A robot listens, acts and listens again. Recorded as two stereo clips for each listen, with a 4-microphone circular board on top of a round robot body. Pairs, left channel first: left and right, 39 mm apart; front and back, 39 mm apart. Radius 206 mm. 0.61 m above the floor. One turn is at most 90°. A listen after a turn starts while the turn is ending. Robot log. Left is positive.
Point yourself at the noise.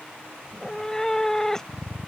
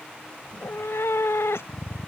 note: The cat meowing: 10° left.
cmd yaw +10
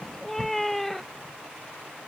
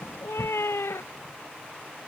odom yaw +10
end: Found it: a cat meowing, straight ahead.